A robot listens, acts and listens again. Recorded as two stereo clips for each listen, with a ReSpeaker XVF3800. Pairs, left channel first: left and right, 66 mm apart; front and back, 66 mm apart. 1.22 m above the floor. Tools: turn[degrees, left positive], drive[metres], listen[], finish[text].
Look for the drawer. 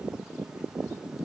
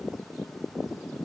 Action: listen[]
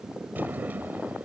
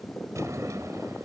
Thought: The drawer: 150° right.
Action: turn[-150]
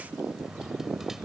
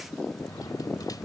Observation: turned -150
Action: listen[]
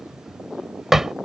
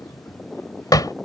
Action: finish[Found it: a drawer, straight ahead.]